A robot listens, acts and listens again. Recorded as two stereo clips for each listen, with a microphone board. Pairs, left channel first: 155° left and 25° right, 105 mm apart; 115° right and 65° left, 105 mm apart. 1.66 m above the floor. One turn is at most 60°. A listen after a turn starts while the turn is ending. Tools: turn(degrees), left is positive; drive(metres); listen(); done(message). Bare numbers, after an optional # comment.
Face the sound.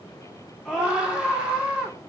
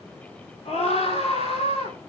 # The scream: 105° right.
turn(-60)
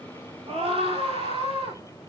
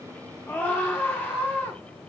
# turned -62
# The scream is now 40° right.
turn(-40)
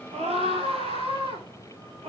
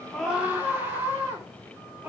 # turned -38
done("Facing the scream.")